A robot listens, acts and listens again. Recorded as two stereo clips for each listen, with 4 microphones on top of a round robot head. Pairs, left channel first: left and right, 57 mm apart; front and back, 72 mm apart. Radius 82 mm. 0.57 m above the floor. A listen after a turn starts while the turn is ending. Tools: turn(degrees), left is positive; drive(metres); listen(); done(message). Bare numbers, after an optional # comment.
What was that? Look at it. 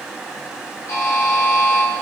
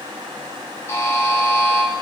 # The buzzer: 50° left.
turn(50)
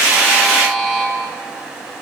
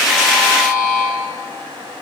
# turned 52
done("Facing the buzzer.")